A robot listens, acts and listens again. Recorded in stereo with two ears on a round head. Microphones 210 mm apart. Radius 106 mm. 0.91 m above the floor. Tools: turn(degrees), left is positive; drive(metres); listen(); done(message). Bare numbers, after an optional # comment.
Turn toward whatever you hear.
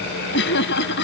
# The laughter: about 50° left or 130° left.
turn(50)
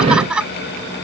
done("Found it: laughter, straight ahead.")